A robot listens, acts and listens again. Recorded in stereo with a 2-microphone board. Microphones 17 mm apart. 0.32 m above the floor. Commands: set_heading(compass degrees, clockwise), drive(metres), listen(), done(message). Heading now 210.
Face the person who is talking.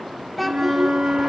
set_heading(180)
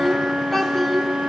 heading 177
set_heading(147)
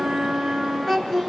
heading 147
set_heading(342)
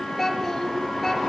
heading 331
done("Facing the child speaking, 2 to 4 m away.")